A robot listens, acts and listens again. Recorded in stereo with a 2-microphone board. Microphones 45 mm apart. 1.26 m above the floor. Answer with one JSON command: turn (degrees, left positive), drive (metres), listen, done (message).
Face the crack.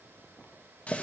{"listen": true}
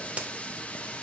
{"turn": -25}
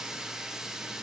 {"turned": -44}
{"listen": true}
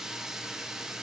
{"done": "I heard a crack, but can't make it out now. It was about 20° left or 110° right."}